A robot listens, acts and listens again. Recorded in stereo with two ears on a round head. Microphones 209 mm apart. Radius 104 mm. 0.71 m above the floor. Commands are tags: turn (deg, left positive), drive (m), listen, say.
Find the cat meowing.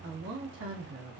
<listen/>
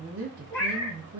<turn deg="30"/>
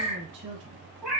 <say>Facing the cat meowing.</say>